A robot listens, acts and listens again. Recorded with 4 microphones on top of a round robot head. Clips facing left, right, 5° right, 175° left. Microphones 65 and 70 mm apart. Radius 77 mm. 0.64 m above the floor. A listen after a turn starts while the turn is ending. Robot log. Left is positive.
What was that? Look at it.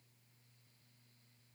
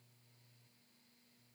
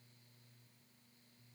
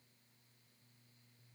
cmd idle
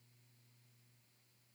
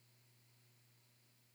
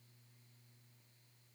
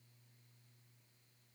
cmd idle
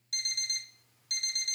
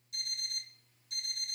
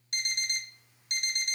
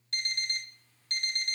note: The alarm clock: 70° left.
cmd yaw +70
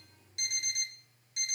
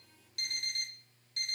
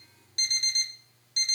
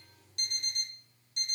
note: The alarm clock is now 15° left.
cmd yaw +15
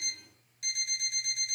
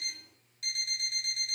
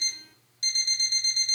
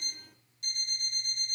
end: Facing the alarm clock, 1 to 2 m away.